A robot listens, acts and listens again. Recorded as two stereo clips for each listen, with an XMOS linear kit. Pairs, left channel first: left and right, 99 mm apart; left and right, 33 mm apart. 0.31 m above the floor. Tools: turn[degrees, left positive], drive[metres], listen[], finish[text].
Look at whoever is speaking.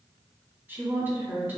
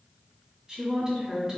Thought: The woman speaking: about 20° right or 160° right.
Action: turn[-20]
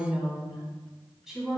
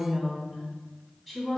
Action: finish[Facing the woman speaking, 1 to 2 m away.]